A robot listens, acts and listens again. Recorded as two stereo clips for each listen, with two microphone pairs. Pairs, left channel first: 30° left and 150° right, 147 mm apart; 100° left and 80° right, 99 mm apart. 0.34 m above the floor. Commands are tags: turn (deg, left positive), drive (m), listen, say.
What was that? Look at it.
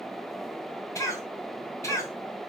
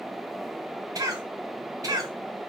<turn deg="-35"/>
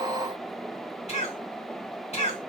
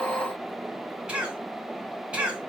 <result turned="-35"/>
<say>Facing the cough.</say>